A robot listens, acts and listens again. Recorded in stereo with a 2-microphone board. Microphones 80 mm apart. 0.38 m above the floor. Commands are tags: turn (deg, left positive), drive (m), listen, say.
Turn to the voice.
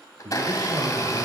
<turn deg="-65"/>
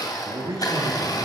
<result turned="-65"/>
<turn deg="-55"/>
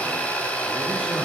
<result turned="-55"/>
<listen/>
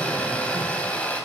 <listen/>
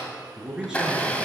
<turn deg="-10"/>
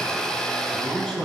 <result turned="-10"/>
<say>Found it: a man speaking, straight ahead, over 4 m away.</say>